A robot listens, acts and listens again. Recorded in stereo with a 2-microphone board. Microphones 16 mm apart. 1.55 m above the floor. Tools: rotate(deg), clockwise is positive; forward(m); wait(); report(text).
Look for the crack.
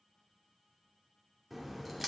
rotate(30)
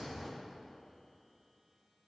rotate(-25)
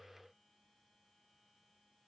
report("I heard a crack from this way, but can't make it out now.")